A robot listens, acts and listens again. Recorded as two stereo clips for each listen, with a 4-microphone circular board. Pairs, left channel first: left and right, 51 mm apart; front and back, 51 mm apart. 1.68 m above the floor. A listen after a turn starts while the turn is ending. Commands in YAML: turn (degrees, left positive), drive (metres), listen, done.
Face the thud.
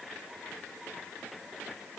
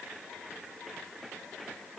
listen: true
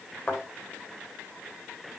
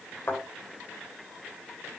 turn: 20
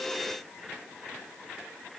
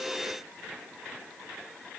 done: "I heard a thud from this way, but can't make it out now."